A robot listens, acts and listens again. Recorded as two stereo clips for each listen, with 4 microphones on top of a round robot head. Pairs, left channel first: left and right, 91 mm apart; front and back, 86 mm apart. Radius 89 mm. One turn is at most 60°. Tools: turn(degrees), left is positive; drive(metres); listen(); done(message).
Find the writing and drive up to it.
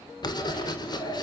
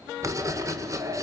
turn(degrees=60)
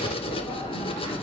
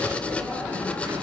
turn(degrees=60)
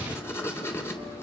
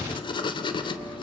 turn(degrees=25)
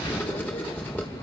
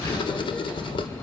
turn(degrees=15)
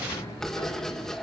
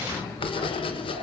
drive(metres=1.0)
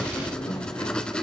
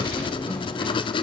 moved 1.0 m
turn(degrees=10)
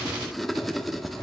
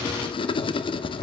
drive(metres=1.0)
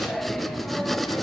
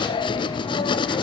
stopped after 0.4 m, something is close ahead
done("Arrived at the writing, straight ahead.")